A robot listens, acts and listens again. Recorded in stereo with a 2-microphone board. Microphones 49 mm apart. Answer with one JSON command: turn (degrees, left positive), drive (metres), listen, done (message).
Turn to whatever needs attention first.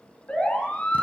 {"turn": 25}
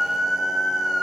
{"done": "Found it: a siren, straight ahead, over 4 m away."}